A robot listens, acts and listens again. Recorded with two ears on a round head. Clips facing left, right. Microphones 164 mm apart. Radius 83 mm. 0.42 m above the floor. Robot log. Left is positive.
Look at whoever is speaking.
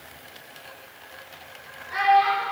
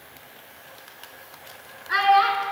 cmd yaw -90
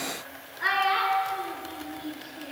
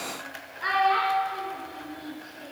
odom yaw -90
end: Facing the child speaking.